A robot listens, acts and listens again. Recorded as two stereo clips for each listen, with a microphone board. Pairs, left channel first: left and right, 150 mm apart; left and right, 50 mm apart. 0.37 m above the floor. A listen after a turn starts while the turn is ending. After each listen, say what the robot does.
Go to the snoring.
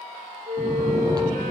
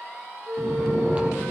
Turn 25° right.
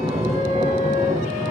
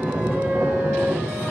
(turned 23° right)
Turn 130° right.
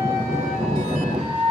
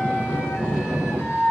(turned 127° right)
Drive 1.0 m forward.
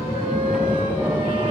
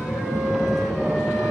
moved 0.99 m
Drive 1.0 m forward.
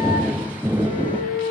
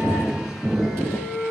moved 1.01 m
Turn 10° right.
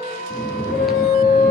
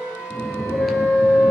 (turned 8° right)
Drive 1.0 m forward.
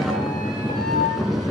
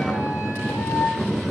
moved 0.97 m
Drive 1.0 m forward.
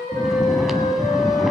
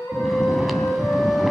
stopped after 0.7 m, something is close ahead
I am next to the snoring.